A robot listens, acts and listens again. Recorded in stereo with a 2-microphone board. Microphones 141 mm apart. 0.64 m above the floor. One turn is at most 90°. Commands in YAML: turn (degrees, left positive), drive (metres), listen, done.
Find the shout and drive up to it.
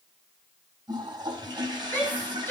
turn: 15
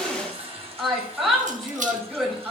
drive: 1.0
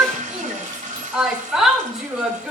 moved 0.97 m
drive: 1.0
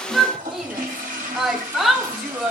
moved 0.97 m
drive: 1.0
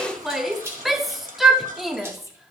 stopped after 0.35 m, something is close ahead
done: "I am next to the shout."